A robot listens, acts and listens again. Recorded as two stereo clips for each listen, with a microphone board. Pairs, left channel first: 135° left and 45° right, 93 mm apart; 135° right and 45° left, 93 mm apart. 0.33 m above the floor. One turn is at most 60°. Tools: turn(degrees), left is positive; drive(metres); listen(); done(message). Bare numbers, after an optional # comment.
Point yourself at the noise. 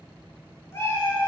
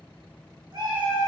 # The cat meowing: 75° left.
turn(60)
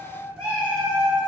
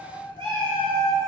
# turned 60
# The cat meowing is now 30° left.
turn(30)
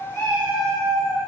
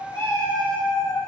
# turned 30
# The cat meowing is now 10° left.
turn(10)
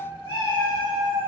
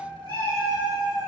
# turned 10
done("Found it: a cat meowing, straight ahead, 2 to 4 m away.")